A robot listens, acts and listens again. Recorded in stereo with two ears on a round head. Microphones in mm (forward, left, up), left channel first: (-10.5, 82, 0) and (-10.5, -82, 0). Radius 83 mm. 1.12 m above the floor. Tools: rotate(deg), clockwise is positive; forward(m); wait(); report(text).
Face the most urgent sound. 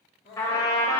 rotate(-60)
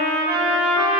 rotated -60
wait()
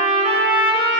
wait()
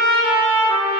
report("I heard crying, but can't make it out now. It was about straight ahead or 60° left.")